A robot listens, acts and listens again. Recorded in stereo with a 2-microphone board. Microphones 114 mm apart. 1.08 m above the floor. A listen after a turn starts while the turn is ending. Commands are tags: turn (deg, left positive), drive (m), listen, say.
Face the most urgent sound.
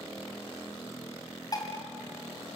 <listen/>
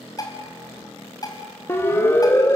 <turn deg="20"/>
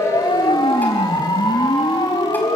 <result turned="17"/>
<turn deg="140"/>
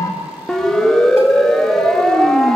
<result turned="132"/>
<say>Facing the siren, 2 to 4 m away.</say>